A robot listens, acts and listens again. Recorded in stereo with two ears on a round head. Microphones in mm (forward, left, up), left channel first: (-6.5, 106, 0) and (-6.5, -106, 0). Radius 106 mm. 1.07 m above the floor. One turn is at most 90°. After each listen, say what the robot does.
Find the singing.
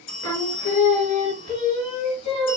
Turn 25° left.
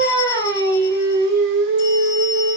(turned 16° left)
Turn 90° left.
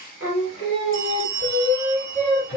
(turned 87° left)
Turn 30° left.
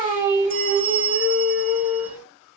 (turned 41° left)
Turn 10° right.
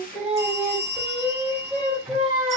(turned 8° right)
Facing the singing, 2 to 4 m away.